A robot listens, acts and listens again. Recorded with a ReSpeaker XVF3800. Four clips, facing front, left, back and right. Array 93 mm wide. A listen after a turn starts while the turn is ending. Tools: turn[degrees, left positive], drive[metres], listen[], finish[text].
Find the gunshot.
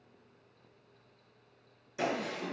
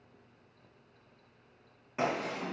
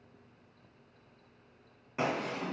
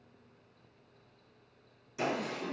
Thought: The gunshot: 135° left.
Action: turn[135]
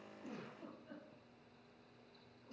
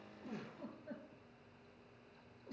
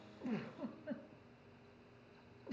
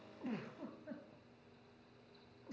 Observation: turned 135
Action: finish[Facing where the gunshot came from. I can't hear it now.]